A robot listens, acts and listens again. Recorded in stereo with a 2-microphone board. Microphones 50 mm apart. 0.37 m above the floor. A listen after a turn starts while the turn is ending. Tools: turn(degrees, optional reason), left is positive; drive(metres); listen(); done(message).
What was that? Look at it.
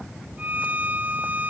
turn(degrees=-35, reason="The violin: about 35° right or 145° right.")
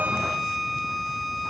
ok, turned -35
done("Facing the violin.")